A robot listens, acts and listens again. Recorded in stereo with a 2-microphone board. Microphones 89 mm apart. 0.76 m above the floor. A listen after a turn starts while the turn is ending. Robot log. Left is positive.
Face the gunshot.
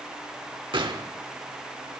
note: The gunshot: about 65° right or 115° right.
cmd yaw -65
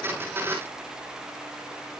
cmd idle
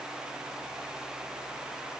end: I heard a gunshot, but can't make it out now. It was about straight ahead or 50° right.